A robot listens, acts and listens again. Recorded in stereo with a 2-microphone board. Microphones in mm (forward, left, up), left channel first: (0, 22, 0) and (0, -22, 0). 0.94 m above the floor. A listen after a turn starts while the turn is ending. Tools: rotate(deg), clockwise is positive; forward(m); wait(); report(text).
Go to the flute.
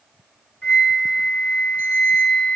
rotate(-25)
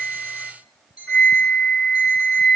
rotate(-130)
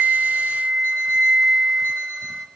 forward(1.0)
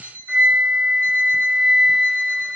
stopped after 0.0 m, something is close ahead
report("Something is in my way. I am facing the flute but have not reached it.")